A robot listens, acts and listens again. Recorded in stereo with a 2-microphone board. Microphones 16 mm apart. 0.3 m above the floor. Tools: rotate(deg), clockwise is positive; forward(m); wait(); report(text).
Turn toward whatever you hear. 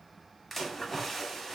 rotate(-30)
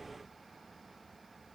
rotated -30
wait()
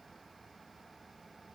report("I heard a splash, but can't make it out now. It was about 30° right or 150° left.")